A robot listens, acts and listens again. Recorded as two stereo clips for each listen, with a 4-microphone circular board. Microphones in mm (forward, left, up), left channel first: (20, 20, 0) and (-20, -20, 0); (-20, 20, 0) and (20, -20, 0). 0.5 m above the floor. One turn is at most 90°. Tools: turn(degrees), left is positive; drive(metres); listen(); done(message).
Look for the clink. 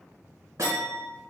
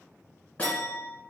turn(degrees=-90)
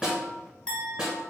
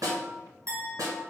turn(degrees=-25)
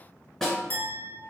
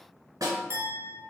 done("Found it: a clink, straight ahead, 1 to 2 m away.")